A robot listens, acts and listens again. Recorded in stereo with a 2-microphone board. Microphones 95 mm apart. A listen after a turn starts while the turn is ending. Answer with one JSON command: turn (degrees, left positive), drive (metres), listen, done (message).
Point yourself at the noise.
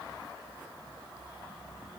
{"listen": true}
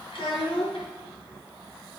{"turn": 65}
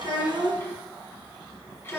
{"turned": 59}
{"turn": 25}
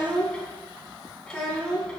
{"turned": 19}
{"turn": 10}
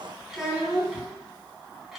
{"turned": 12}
{"done": "Facing the child speaking, 2 to 4 m away."}